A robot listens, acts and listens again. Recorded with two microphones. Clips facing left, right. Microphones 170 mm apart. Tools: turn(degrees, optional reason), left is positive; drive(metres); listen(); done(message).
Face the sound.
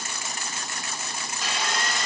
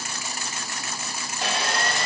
turn(degrees=-60, reason="The sawing: about 60° right or 120° right.")
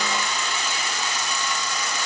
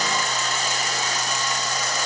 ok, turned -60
turn(degrees=-45, reason="So it is at 45° right.")
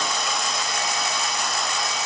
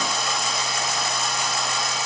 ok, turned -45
done("Found it: sawing, straight ahead.")